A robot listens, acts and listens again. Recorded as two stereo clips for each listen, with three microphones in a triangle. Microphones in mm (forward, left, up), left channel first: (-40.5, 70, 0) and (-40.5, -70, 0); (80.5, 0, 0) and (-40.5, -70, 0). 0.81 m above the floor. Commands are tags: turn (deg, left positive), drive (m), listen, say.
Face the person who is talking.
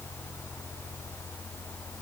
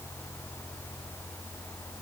<listen/>
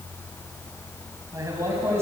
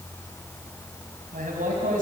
<turn deg="-160"/>
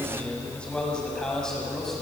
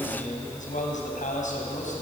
<listen/>
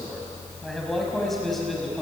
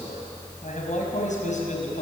<say>Facing the man speaking.</say>